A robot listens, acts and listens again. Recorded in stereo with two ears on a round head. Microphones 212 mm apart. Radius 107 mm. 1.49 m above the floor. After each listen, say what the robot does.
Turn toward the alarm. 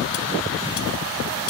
Keep listening.
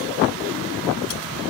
Keep listening.
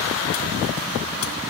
I can't make out an alarm.